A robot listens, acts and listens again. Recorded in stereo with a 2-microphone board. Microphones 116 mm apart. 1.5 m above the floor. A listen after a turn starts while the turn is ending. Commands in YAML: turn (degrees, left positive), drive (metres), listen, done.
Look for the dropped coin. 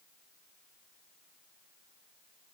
listen: true
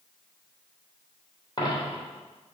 turn: 40
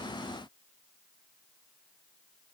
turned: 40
listen: true
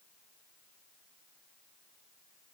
done: "I heard a dropped coin, but can't make it out now. It was about straight ahead or 100° left."